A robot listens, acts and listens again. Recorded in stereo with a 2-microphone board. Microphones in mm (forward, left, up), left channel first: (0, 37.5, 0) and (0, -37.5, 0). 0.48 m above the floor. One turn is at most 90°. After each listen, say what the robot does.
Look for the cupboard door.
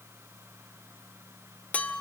Keep listening.
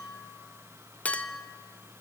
Keep listening.
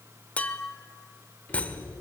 Turn 20° left.
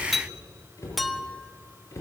Turn 90° left.
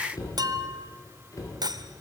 Turn 50° left.
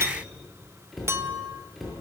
Found it: a cupboard door, straight ahead.